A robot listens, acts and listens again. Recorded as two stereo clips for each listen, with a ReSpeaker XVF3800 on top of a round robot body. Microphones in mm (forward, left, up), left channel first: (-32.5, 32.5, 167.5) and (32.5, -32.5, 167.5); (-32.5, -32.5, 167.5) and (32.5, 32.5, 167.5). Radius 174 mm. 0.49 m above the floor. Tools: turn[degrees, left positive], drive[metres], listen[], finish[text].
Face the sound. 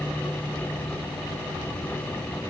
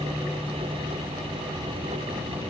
Action: listen[]
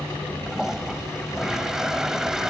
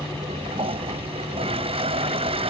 Thought: The toilet flushing: 40° left.
Action: turn[40]
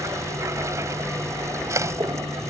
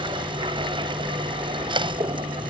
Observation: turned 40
Thought: The toilet flushing is now 15° left.
Action: turn[15]
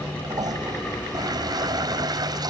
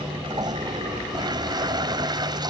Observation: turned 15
Action: finish[Found it: a toilet flushing, straight ahead.]